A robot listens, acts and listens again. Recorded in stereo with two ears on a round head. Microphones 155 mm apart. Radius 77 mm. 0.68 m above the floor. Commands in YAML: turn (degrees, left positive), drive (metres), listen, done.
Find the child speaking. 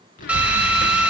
turn: 50
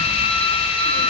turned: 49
listen: true
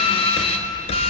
done: "Facing the child speaking."